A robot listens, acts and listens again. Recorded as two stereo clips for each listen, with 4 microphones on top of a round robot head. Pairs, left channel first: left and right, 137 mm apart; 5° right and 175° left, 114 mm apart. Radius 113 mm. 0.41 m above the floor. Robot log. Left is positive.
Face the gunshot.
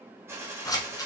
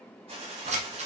note: The gunshot: 160° right.
cmd yaw -160
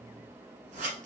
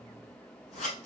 end: I heard a gunshot from this way, but can't make it out now.